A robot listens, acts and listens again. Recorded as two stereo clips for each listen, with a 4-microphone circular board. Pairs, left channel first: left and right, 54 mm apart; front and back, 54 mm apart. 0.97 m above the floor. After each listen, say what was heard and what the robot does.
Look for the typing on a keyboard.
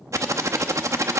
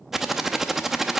The typing on a keyboard: 100° right. Turn 100° right.
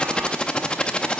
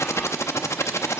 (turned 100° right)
The typing on a keyboard is now 20° left. Turn 20° left.
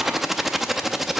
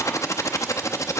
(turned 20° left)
Facing the typing on a keyboard.